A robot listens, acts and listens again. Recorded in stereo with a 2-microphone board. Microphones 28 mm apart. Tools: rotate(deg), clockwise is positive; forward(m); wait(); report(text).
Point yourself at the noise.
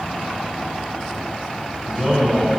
rotate(30)
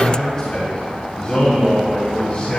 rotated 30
rotate(-45)
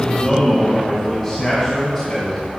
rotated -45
rotate(-10)
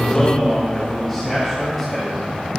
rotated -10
report("Found it: a man speaking, straight ahead, 2 to 4 m away.")